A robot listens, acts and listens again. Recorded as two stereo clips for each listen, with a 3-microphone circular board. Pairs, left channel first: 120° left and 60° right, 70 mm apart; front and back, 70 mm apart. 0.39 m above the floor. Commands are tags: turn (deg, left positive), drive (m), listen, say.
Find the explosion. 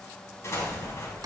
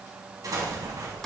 <turn deg="165"/>
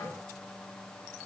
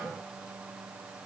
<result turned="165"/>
<say>I heard an explosion from this way, but can't make it out now.</say>